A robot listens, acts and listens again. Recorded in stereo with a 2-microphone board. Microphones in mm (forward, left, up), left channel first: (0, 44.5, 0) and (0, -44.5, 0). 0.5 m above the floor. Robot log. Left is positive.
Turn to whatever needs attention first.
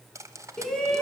cmd yaw +30
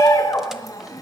note: So it is at 140° left.
cmd yaw +140
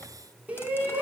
note: The shout is now 15° right.
cmd yaw -15
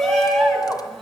end: Found it: a shout, straight ahead.